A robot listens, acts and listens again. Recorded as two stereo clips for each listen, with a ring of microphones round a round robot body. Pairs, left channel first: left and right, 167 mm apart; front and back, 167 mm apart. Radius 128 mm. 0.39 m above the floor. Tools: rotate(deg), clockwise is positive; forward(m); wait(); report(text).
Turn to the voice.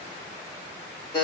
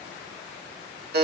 wait()
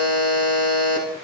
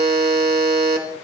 wait()
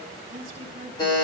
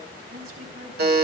rotate(145)
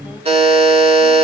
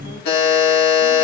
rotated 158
rotate(-15)
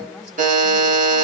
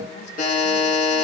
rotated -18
wait()
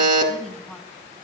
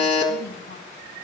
report("Facing where the woman speaking came from. I can't hear it now.")